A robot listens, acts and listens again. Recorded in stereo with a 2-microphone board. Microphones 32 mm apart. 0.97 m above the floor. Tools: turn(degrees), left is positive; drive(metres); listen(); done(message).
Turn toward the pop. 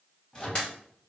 turn(degrees=30)
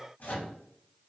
listen()
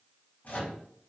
done("I heard a pop, but can't make it out now. It was about straight ahead or 120° left.")